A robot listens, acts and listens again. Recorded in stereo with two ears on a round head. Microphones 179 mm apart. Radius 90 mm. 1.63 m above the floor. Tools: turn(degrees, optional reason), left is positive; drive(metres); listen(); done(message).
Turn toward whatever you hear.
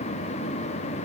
listen()
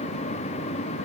listen()
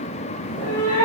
turn(degrees=40, reason="The cat meowing: about 40° left or 140° left.")
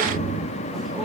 done("Found it: a cat meowing, straight ahead.")